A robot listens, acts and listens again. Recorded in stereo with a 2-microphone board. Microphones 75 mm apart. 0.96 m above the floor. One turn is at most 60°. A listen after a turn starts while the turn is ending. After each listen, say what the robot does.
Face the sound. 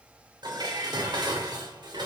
Turn 60° right.
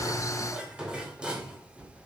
Turn 10° right.
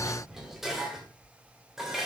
Found it: dishes clattering, straight ahead, 2 to 4 m away.